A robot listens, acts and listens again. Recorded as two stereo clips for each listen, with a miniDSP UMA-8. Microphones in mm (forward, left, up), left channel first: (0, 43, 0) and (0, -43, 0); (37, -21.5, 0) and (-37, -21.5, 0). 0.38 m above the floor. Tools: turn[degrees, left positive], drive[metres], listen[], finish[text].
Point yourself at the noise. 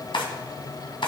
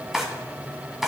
Thought: The drawer: 95° left.
Action: turn[95]
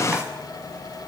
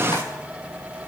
Action: listen[]
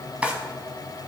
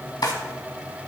Thought: The drawer is now 15° right.
Action: turn[-15]
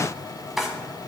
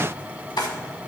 Action: finish[Facing the drawer, 1 to 2 m away.]